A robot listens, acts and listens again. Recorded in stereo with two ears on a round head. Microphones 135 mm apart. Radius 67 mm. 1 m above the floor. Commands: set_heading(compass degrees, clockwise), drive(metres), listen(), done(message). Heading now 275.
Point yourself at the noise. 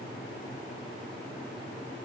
listen()
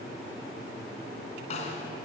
set_heading(230)
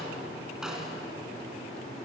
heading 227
done("Facing the snare drum.")